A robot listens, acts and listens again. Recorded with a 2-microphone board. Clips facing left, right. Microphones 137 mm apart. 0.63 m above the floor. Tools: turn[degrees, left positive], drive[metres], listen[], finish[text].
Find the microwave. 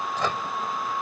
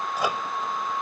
Action: turn[-30]
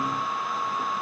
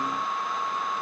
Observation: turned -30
Action: listen[]
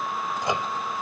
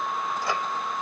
Thought: So it is at 20° left.
Action: turn[20]
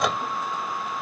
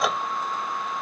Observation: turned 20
Action: finish[Found it: a microwave, straight ahead.]